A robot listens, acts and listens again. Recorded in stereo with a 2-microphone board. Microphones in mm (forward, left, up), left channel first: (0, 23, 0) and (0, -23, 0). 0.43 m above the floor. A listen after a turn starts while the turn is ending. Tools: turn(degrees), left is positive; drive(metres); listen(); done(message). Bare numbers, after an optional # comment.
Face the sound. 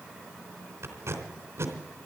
# The tape being pulled: about 65° right or 115° right.
turn(-65)
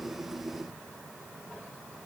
listen()
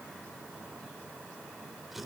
done("Facing the tape being pulled, 2 to 4 m away.")